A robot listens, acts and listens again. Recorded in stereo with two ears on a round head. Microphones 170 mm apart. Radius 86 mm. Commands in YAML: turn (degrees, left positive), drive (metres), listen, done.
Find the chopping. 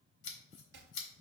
turn: -60
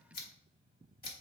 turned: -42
listen: true
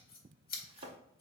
turn: -30
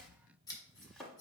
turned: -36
done: "Facing the chopping, under 1 m away."